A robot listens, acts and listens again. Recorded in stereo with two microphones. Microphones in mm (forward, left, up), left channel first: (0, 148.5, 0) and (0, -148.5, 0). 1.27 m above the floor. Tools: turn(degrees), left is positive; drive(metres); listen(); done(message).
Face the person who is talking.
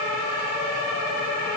listen()
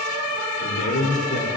turn(degrees=70)
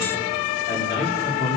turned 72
turn(degrees=35)
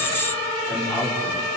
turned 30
done("Found it: a man speaking, straight ahead.")